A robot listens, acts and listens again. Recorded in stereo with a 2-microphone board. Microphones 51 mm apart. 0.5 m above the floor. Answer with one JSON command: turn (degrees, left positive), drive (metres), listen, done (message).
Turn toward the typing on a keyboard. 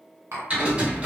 {"turn": -25}
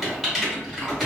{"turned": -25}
{"done": "Facing the typing on a keyboard."}